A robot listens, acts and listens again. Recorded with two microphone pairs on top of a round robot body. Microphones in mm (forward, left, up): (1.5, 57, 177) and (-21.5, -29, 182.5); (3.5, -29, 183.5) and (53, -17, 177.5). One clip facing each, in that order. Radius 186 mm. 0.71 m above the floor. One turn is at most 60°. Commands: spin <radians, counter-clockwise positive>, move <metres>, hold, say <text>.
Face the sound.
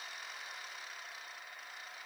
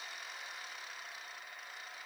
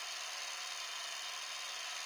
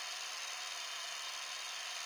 hold
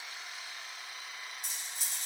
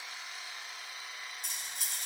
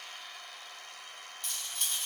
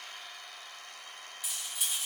spin -1.05
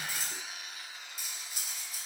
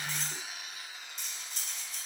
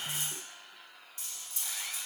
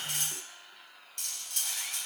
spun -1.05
spin -0.17
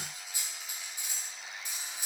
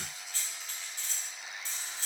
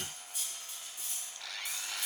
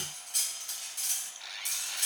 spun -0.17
say Found it: cutlery clinking, straight ahead.